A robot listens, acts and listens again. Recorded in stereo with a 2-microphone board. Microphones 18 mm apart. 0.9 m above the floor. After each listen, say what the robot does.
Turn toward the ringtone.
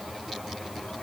Keep listening.
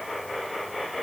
Keep listening.
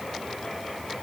I can't make out a ringtone.